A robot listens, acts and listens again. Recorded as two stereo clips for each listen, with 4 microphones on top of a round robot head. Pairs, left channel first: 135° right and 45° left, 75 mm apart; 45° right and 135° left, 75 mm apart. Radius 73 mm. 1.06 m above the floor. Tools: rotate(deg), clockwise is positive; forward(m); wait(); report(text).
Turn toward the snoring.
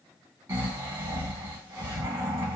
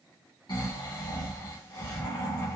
rotate(10)
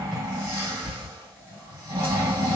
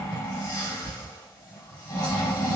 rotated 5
rotate(10)
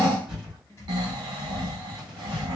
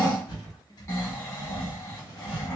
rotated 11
report("Facing the snoring, 2 to 4 m away.")